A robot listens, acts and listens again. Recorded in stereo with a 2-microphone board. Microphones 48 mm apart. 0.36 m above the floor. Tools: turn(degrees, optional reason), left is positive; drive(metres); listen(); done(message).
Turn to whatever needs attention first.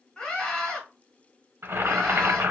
turn(degrees=20, reason="The scream: about 20° left or 160° left.")
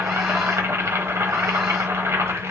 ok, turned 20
listen()
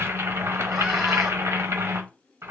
listen()
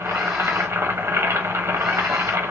done("I heard a scream, but can't make it out now. It was about straight ahead or 140° left.")